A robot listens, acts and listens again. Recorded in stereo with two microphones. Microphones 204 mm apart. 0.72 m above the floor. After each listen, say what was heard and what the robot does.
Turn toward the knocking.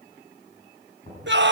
The knocking: about 35° left or 145° left. Turn 35° left.
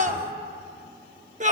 Keep listening.
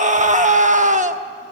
Keep listening.
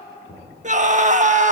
So it is at 110° left. Turn 110° left.
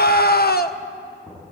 The knocking is now 10° left. Turn 10° left.
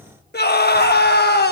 Keep listening.
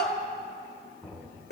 Found it: knocking, straight ahead, over 4 m away.